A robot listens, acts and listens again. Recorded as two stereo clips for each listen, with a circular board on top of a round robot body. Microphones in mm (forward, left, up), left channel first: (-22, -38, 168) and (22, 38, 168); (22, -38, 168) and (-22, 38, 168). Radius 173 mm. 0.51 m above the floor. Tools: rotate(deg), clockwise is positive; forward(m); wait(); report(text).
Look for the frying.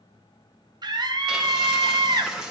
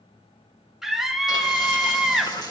rotate(25)
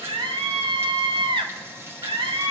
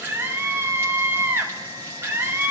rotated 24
report("Found it: frying, straight ahead, 2 to 4 m away.")